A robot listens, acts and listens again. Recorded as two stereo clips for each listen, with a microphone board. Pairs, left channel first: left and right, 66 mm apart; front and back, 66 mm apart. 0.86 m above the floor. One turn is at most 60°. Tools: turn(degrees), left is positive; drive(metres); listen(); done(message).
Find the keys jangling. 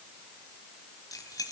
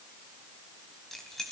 turn(degrees=60)
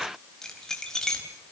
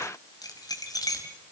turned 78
turn(degrees=10)
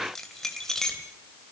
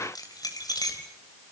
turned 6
turn(degrees=10)
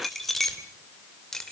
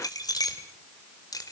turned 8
done("Found it: keys jangling, straight ahead, 2 to 4 m away.")